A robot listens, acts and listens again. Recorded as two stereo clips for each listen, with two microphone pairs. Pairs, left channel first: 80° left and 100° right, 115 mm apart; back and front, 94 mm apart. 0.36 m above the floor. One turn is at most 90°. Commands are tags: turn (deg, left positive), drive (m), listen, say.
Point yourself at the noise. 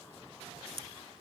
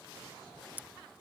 <turn deg="-70"/>
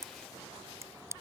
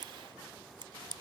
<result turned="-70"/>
<turn deg="-35"/>
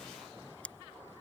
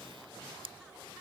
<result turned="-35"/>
<say>Found it: scissors, straight ahead.</say>